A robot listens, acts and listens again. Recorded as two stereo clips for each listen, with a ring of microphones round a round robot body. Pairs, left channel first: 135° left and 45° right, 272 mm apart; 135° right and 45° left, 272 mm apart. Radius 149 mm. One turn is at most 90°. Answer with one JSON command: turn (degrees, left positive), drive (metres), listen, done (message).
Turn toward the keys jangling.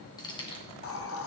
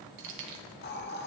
{"turn": 65}
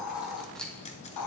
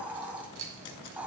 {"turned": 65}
{"turn": 50}
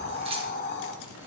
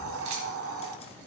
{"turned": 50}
{"listen": true}
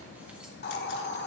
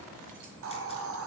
{"listen": true}
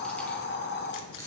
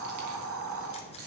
{"turn": 55}
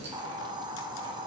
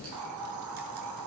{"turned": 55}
{"listen": true}
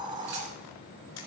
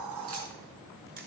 {"listen": true}
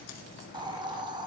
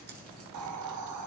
{"done": "Facing where the keys jangling came from. I can't hear it now."}